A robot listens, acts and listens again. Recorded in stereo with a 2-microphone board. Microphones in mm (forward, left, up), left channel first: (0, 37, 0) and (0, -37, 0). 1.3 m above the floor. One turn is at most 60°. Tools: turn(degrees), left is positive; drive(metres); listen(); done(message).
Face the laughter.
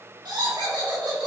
turn(degrees=-60)
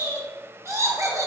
turn(degrees=-45)
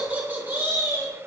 turn(degrees=-35)
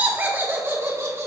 turn(degrees=-40)
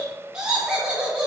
turn(degrees=-10)
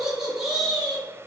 done("Facing the laughter, 1 to 2 m away.")